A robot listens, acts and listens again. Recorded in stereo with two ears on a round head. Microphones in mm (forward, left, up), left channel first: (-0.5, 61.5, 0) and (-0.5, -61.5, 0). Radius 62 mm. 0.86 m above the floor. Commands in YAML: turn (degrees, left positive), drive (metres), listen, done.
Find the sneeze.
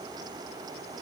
listen: true
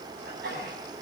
turn: -90
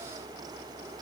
done: "Facing where the sneeze came from. I can't hear it now."